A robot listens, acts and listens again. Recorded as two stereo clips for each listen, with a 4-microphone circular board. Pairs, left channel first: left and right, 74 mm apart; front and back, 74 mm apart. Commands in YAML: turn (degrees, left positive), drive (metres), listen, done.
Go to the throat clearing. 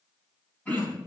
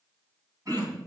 turn: 150
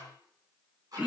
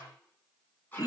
turn: -20
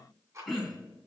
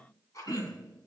drive: 1.0
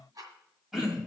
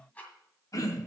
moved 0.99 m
drive: 1.0
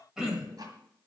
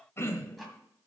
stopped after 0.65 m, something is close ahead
turn: -10
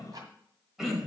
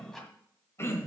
done: "I am next to the throat clearing."